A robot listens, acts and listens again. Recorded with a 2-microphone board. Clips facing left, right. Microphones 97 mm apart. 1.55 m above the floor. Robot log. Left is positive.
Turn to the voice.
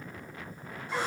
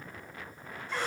cmd idle
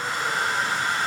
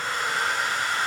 cmd idle
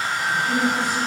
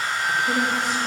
cmd yaw -90
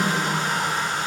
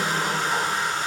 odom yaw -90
note: So it is at 10° right.
cmd yaw -10
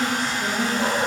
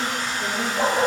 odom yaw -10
end: Found it: a woman speaking, straight ahead.